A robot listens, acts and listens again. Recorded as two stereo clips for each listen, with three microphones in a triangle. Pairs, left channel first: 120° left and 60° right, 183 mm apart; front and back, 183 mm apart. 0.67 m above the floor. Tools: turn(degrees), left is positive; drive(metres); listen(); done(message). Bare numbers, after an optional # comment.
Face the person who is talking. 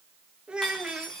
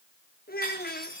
# The child speaking: 25° left.
turn(25)
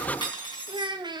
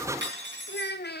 done("Found it: a child speaking, straight ahead, 1 to 2 m away.")